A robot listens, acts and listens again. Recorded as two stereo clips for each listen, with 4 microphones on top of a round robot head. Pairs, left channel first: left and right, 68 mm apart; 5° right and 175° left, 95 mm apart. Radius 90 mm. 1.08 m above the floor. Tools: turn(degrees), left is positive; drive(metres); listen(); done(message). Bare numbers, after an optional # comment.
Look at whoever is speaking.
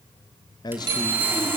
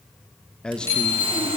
# The man speaking: 80° left.
turn(80)
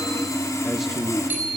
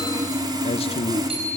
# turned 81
done("Found it: a man speaking, straight ahead, 1 to 2 m away.")